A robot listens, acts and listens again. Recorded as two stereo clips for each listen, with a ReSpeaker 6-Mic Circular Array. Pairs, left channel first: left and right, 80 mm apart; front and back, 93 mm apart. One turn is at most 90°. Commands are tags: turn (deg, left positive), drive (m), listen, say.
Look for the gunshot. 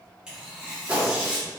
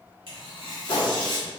<turn deg="-20"/>
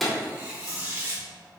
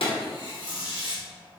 <say>Facing the gunshot.</say>